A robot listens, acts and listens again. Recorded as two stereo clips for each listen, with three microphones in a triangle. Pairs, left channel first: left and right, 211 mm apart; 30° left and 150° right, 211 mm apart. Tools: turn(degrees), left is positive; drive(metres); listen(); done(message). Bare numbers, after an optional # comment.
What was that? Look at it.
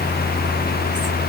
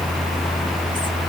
listen()
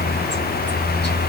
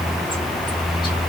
listen()
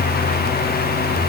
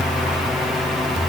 done("I can't make out anything to turn to.")